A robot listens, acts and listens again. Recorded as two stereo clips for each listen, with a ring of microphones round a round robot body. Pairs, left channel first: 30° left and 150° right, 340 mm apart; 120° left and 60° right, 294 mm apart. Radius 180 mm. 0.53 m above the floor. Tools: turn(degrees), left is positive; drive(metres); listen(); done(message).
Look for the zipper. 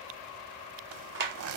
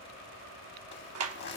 turn(degrees=170)
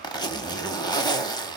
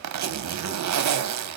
turn(degrees=-45)
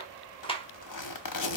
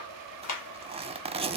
turn(degrees=10)
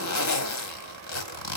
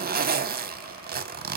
done("Facing the zipper, 1 to 2 m away.")